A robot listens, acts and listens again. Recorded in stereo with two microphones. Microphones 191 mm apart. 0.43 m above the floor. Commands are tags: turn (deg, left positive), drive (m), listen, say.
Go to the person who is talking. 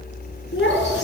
<turn deg="90"/>
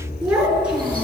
<drive m="1.0"/>
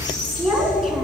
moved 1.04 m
<drive m="1.0"/>
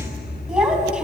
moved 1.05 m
<drive m="1.0"/>
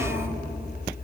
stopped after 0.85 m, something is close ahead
<turn deg="-15"/>
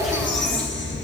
<say>I am next to the child speaking.</say>